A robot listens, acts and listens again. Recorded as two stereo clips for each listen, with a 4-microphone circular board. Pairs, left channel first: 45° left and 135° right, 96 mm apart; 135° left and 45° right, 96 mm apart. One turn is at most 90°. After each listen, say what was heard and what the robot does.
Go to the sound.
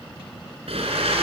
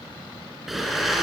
The blender: 135° right. Turn 90° right.
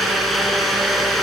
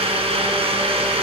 The blender is now 45° right. Turn 45° right.
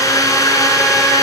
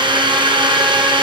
The blender is now 10° right. Turn 10° right.
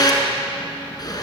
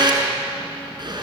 Drive 1.0 m forward.
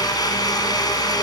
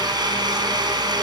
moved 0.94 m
Drive 1.0 m forward.
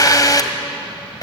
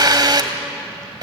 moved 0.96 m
Drive 1.0 m forward.
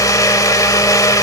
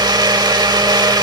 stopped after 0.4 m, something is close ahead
Arrived at the blender, straight ahead.